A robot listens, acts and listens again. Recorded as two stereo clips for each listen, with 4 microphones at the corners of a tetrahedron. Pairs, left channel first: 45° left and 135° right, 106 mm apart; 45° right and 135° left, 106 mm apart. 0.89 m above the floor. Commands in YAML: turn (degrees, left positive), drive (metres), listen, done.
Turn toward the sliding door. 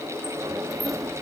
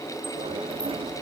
turn: 165
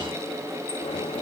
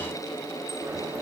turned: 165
listen: true
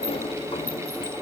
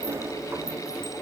turn: 70
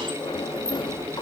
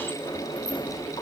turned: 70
done: "Facing the sliding door, under 1 m away."